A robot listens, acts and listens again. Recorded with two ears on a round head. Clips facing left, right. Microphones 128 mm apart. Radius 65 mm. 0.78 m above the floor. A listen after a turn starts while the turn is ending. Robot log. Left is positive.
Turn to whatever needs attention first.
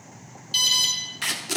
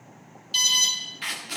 cmd yaw +30
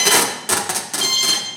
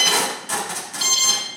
note: So it is at 15° right.
cmd yaw -15
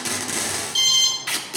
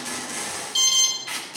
end: Found it: an alarm, straight ahead.